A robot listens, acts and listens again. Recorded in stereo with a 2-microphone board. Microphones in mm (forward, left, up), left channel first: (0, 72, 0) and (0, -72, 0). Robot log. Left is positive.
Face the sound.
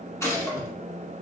note: The gunshot: about 20° left or 160° left.
cmd yaw +20
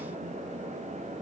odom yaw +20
cmd idle
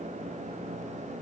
end: I heard a gunshot, but can't make it out now. It was about straight ahead or 140° left.